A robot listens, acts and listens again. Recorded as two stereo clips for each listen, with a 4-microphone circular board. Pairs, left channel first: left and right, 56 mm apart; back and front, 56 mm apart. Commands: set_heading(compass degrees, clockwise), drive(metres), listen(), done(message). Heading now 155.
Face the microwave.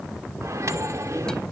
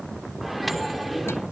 set_heading(245)
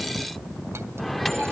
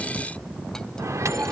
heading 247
done("Found it: a microwave, straight ahead, 1 to 2 m away.")